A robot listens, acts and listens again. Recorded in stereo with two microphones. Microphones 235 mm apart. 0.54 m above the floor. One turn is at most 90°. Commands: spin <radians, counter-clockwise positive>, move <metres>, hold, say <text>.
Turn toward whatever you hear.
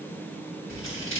spin 1.05
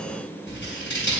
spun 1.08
spin 0.96
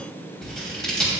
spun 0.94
say Facing the scissors, 2 to 4 m away.